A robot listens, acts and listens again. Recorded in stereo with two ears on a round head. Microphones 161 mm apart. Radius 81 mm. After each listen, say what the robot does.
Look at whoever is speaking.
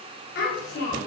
Turn 70° left.
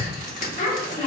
Turn 40° left.
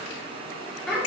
Found it: a child speaking, straight ahead, 2 to 4 m away.